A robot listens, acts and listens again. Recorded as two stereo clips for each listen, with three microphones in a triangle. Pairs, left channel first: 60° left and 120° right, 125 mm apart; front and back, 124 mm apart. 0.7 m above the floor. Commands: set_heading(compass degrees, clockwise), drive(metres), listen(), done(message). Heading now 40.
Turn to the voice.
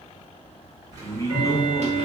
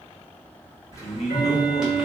done("Found it: a man speaking, straight ahead, under 1 m away.")